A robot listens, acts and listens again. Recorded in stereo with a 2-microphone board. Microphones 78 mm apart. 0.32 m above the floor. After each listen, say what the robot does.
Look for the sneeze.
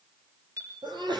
Turn 75° right.
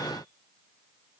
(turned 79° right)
Keep listening.
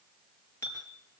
I heard a sneeze, but can't make it out now. It was about 5° left or 25° right.